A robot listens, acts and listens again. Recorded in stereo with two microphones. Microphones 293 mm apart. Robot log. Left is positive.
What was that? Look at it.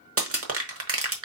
note: The crushing: about 45° right or 135° right.
cmd yaw -45
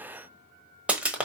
end: Facing the crushing, 1 to 2 m away.